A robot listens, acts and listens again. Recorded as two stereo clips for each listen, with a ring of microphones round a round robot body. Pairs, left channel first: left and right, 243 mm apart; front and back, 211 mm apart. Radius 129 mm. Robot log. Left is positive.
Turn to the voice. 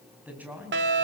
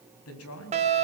end: Facing the man speaking.